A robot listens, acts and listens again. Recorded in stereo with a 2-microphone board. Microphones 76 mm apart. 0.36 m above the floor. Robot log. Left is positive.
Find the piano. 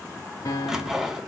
note: The piano: about 50° left or 130° left.
cmd yaw +50
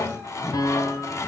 note: So it is at 70° left.
cmd yaw +70
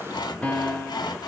note: The piano is now 20° left.
cmd yaw +20
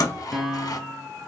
end: Facing the piano, 1 to 2 m away.